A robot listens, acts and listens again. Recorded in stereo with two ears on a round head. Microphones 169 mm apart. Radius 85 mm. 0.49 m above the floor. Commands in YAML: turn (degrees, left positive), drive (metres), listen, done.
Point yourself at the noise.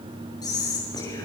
turn: 20
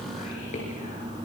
turn: 135
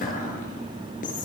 turn: 45
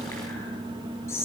turn: 15
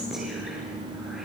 listen: true
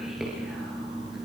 listen: true
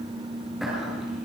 done: "Facing the whispering, over 4 m away."